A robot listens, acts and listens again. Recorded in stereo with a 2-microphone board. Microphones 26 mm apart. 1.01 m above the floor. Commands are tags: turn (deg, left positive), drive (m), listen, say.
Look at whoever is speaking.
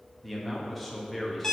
<turn deg="30"/>
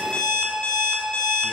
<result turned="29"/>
<listen/>
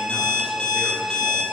<listen/>
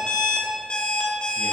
<say>I heard a man speaking, but can't make it out now. It was about 25° right or 145° left.</say>